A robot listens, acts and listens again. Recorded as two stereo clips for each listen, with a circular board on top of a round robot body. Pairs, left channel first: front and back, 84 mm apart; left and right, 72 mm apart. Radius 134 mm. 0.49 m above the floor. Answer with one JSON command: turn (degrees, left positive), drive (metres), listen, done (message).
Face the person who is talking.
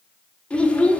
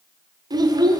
{"turn": -75}
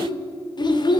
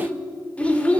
{"turn": 20}
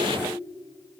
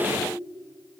{"listen": true}
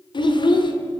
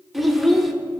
{"done": "Found it: a child speaking, straight ahead."}